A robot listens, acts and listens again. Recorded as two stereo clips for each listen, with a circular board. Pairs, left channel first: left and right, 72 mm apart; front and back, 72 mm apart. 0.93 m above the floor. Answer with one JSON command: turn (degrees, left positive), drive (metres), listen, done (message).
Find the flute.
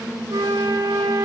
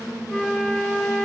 {"turn": -90}
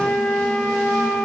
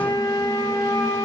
{"done": "Found it: a flute, straight ahead, under 1 m away."}